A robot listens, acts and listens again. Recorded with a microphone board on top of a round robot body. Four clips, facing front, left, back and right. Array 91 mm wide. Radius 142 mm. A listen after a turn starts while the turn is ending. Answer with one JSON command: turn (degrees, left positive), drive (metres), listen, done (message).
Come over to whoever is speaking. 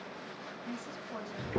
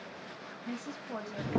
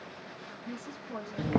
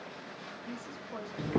{"turn": 105}
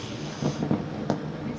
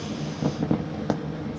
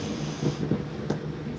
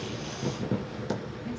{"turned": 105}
{"listen": true}
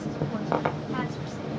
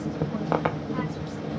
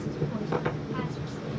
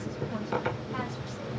{"listen": true}
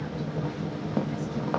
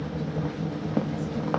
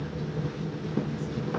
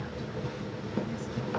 {"done": "Facing where the woman speaking came from. I can't hear it now. I did not reach it."}